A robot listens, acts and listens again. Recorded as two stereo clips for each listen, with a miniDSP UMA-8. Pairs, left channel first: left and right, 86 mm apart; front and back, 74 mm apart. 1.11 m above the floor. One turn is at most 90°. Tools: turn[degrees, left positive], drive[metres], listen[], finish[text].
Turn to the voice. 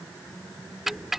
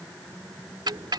Action: listen[]
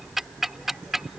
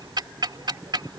Action: listen[]
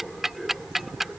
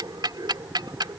Action: finish[I can't make out anyone speaking, only ticking.]